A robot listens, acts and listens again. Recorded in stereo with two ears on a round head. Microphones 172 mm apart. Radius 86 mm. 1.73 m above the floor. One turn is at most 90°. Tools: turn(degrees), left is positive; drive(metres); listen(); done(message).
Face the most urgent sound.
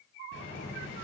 listen()
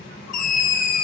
turn(degrees=45)
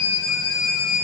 turn(degrees=90)
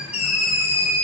turn(degrees=35)
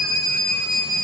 done("Found it: a scream, straight ahead.")